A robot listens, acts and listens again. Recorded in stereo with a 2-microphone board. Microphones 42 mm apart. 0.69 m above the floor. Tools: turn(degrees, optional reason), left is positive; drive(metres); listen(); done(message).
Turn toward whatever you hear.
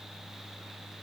listen()
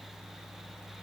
listen()
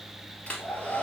turn(degrees=35, reason="The hair dryer: about 35° left or 145° left.")
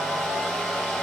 done("Facing the hair dryer, 2 to 4 m away.")